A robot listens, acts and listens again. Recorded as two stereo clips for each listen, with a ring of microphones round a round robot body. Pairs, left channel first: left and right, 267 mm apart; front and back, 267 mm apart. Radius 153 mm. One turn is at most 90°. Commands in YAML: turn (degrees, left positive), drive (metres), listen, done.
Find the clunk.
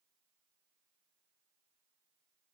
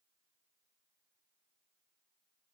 listen: true
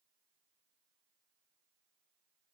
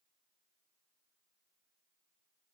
listen: true
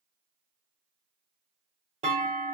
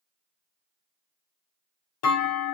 turn: -25
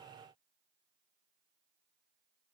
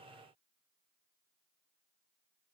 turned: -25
done: "I heard a clunk from this way, but can't make it out now."